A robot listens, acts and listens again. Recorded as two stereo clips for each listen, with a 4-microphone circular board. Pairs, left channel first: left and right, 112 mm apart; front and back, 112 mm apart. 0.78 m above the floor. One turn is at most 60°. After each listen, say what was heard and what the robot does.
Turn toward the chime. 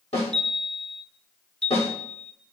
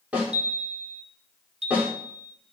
The chime: 170° left. Turn 60° left.
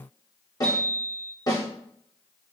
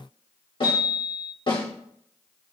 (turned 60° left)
The chime is now 100° left. Turn 60° left.
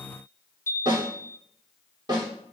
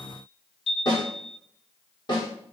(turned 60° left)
The chime is now 25° left. Turn 25° left.
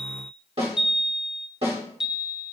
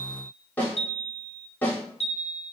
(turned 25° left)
Found it: a chime, straight ahead, under 1 m away.